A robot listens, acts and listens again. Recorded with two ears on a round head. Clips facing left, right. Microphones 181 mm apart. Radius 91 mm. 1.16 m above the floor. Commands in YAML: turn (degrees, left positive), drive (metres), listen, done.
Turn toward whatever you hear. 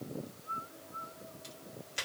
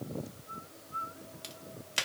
turn: -75
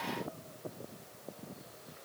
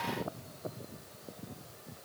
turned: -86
listen: true
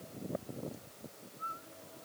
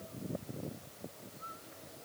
done: "I heard a crack, but can't make it out now. It was about 15° left or 20° right."